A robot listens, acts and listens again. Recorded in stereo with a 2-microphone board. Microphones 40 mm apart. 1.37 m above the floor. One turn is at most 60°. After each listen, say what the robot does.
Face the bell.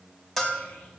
Turn 30° left.
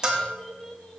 Turn 20° right.
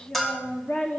Found it: a bell, straight ahead.